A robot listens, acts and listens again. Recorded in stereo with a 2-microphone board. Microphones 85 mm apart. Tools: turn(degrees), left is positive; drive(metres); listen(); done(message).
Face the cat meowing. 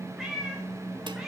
turn(degrees=-30)
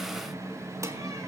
listen()
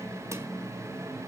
listen()
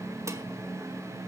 done("I heard a cat meowing, but can't make it out now. It was about 25° left or 145° right.")